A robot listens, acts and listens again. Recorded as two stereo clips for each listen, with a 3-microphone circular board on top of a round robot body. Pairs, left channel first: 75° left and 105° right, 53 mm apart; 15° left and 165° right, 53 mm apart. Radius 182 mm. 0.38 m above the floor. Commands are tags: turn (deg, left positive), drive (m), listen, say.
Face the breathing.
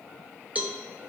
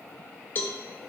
<listen/>
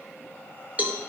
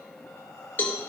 <listen/>
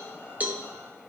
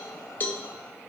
<say>I can't make out breathing, only a cowbell.</say>